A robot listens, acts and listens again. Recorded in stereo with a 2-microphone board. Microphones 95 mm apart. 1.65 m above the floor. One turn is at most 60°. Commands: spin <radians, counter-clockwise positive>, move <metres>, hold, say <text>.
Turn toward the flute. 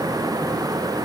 hold
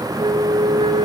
spin -1.05
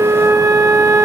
spin -0.52
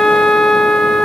say Found it: a flute, straight ahead, 2 to 4 m away.